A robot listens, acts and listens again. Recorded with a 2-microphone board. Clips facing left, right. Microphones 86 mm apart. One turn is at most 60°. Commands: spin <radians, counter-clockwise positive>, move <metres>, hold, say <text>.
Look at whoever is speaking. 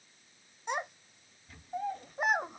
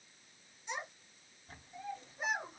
spin 1.05
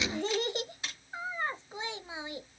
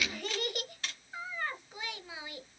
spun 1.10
spin 0.52
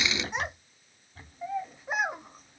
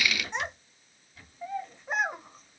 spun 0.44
say Found it: a child speaking, straight ahead, under 1 m away.